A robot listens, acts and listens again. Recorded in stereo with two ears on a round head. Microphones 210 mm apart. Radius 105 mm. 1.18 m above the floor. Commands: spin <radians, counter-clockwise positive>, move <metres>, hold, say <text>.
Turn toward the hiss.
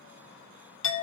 hold
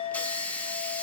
spin 0.52
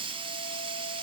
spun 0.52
spin -0.44
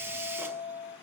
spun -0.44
spin -0.17
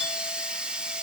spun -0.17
say Found it: a hiss, straight ahead, under 1 m away.